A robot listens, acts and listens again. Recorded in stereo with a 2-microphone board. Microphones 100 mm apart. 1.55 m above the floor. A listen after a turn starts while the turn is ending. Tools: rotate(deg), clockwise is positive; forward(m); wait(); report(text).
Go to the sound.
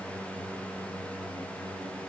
wait()
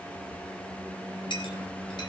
rotate(-55)
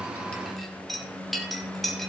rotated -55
forward(1.0)
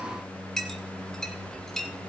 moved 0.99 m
forward(1.0)
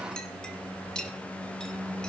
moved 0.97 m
rotate(-10)
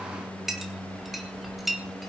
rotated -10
forward(1.0)
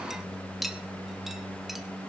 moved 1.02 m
forward(1.0)
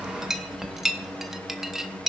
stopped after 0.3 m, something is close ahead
report("I am next to the clink.")